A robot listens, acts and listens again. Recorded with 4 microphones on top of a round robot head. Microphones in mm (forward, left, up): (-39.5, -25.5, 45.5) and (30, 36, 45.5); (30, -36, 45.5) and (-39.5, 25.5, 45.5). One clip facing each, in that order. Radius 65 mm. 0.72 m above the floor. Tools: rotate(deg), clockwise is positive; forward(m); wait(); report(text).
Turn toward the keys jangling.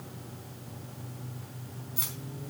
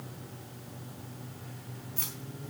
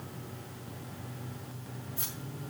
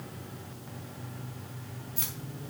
rotate(-145)
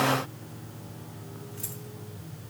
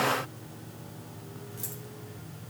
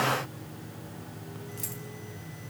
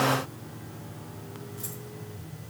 wait()
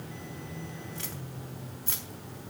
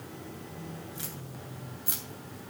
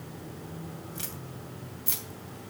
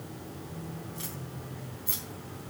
rotate(35)
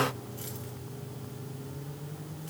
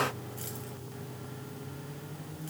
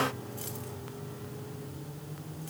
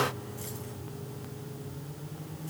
wait()
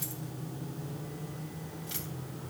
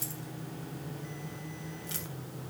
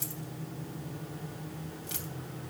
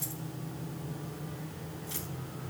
wait()
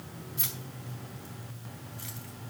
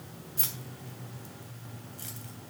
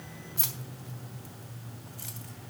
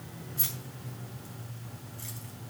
rotate(10)
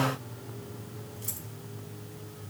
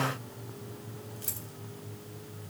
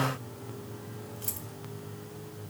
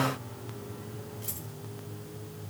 wait()
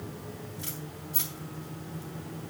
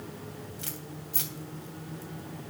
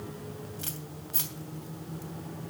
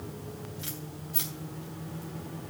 report("Facing the keys jangling, 2 to 4 m away.")